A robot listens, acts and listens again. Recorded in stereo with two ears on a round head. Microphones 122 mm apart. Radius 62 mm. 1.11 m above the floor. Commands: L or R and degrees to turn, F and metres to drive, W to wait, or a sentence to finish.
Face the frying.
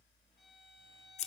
W
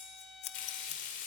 L65
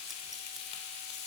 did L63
L45
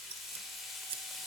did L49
Found it: frying, straight ahead.